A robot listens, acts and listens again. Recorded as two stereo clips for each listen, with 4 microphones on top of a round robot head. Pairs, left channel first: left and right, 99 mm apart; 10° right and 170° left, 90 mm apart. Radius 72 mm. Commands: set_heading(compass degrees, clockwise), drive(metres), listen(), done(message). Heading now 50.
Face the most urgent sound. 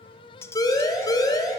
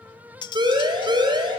set_heading(270)
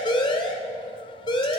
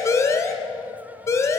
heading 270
set_heading(225)
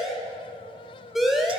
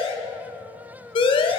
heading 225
done("Found it: a siren, straight ahead, 2 to 4 m away.")